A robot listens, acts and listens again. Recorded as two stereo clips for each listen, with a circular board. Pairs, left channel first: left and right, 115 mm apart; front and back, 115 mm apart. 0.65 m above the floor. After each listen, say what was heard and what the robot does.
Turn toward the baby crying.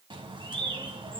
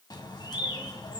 Keep listening.
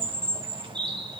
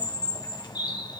Keep listening.
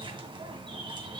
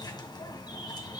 I can't make out a baby crying to turn to.